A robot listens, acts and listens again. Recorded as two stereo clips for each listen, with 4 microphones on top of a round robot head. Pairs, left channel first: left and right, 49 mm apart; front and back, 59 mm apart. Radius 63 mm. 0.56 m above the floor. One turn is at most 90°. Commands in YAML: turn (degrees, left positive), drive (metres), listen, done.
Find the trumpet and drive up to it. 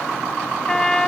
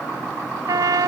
turn: 90
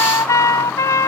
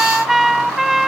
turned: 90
turn: 90
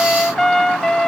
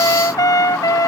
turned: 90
drive: 1.0
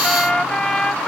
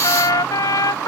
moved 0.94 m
turn: 10
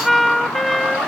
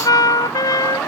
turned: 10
drive: 1.0
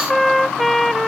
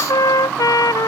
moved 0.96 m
drive: 1.0
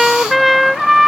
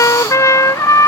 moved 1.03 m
drive: 1.0
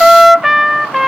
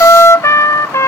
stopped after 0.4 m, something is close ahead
turn: -10
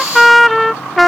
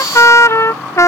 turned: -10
done: "I am next to the trumpet."